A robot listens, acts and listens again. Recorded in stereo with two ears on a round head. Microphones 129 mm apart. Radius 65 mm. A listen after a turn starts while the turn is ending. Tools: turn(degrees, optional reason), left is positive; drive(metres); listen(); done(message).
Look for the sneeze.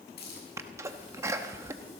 turn(degrees=-20, reason="The sneeze: about 20° right or 160° right.")
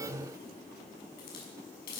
listen()
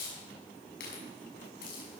done("I heard a sneeze, but can't make it out now. It was about straight ahead or 140° right.")